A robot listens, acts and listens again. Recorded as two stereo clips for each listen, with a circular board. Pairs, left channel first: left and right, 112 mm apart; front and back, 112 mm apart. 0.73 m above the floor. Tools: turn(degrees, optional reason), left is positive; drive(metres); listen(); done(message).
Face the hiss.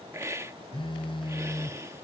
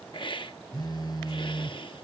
turn(degrees=-30, reason="The hiss: 30° right.")
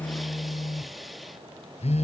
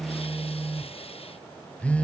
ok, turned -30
listen()
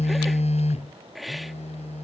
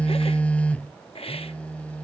done("Facing the hiss.")